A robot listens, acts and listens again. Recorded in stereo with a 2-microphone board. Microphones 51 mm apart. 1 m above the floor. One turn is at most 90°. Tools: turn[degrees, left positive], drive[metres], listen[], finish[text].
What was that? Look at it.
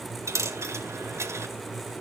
Thought: The dropped coin: about 70° right or 110° right.
Action: turn[-70]
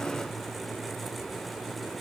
Action: listen[]
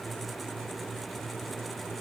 Action: finish[I heard a dropped coin, but can't make it out now. It was about straight ahead or 40° right.]